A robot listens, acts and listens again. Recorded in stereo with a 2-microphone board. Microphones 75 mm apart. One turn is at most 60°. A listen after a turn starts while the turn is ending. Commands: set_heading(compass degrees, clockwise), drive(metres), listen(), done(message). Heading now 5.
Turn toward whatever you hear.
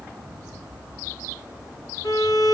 set_heading(305)
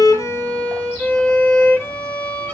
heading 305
set_heading(280)
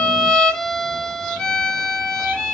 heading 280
set_heading(270)
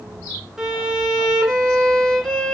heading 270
done("Found it: a violin, straight ahead, 1 to 2 m away.")